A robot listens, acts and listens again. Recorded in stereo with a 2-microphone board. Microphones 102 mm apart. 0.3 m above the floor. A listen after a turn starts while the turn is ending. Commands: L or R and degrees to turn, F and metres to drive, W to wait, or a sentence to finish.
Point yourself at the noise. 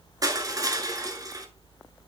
R35
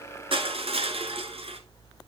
R105
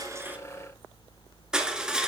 Found it: crushing, straight ahead.